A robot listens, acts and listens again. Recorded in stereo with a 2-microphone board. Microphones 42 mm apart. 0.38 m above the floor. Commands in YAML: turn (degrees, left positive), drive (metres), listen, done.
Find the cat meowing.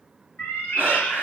turn: 65
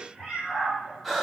done: "Facing the cat meowing, 1 to 2 m away."